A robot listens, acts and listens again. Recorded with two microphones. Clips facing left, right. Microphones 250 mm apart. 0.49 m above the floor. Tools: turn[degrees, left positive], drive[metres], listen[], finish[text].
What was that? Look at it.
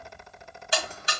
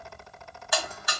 Thought: The buzzer: about 30° left or 150° left.
Action: turn[30]
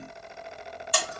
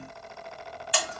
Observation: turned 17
Thought: So it is at 130° left.
Action: turn[130]
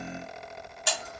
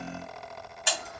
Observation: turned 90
Thought: The buzzer is now 40° left.
Action: turn[40]
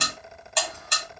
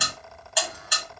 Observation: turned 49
Action: finish[Facing the buzzer.]